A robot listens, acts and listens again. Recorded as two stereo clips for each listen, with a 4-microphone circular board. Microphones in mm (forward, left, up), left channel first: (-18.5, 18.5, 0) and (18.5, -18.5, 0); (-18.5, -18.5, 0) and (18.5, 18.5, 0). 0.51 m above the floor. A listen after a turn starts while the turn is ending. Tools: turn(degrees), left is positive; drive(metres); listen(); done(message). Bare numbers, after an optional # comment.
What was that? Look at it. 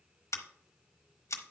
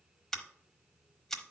# The scissors: 145° left.
turn(145)
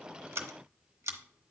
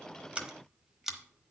# The scissors is now 35° right.
turn(-35)
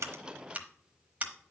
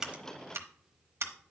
# The scissors is now 15° left.
turn(15)
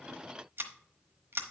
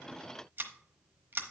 done("Facing the scissors, 1 to 2 m away.")